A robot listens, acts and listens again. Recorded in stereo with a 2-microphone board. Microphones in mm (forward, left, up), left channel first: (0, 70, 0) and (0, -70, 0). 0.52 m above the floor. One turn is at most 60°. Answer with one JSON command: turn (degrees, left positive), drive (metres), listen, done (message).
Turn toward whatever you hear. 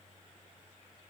{"listen": true}
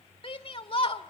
{"turn": 40}
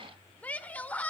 {"turn": 15}
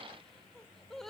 {"done": "Facing the shout, 1 to 2 m away."}